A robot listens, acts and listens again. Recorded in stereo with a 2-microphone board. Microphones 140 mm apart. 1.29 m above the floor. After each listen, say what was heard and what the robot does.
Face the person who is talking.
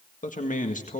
The man speaking: about 65° left or 115° left. Turn 65° left.
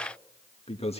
So it is at 45° left. Turn 45° left.
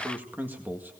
The man speaking is now 15° right. Turn 15° right.
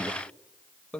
Found it: a man speaking, straight ahead.